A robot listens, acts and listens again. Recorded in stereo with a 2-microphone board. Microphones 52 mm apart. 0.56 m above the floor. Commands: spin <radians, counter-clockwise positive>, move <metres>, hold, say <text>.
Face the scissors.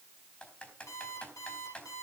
hold
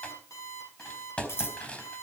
spin 0.96
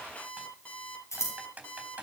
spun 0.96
spin 1.22
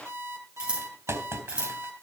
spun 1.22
spin -0.35
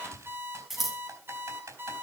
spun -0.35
say Facing the scissors, 2 to 4 m away.